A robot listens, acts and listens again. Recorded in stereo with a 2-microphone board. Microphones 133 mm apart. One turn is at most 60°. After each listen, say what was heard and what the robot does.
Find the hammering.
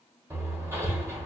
The hammering: about 20° right or 160° right. Turn 20° right.
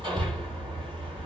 So it is at 140° right. Turn 60° right.
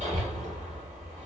The hammering is now 80° right. Turn 60° right.
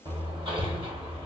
The hammering is now 45° right. Turn 45° right.
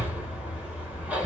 The hammering is now 10° right. Turn 10° right.
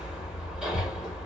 Facing the hammering.